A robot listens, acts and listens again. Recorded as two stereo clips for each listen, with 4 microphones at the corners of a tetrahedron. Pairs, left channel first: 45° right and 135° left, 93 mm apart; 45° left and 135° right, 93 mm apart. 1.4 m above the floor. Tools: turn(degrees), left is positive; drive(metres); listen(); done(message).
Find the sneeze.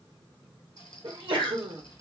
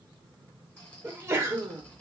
turn(degrees=160)
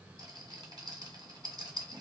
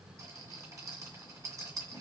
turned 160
done("Facing where the sneeze came from. I can't hear it now.")